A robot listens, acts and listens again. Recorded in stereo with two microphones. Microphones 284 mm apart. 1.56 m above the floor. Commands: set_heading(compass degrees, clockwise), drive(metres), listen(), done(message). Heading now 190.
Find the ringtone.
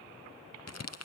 listen()
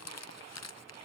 listen()
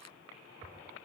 done("I can't make out a ringtone to turn to.")